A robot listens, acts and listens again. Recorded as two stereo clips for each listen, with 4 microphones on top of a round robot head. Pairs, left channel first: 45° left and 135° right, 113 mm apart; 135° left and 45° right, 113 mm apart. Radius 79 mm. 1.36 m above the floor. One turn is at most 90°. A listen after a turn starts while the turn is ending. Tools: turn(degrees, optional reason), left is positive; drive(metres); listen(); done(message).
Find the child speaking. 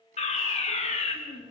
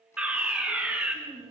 done("Found it: a child speaking, straight ahead, over 4 m away.")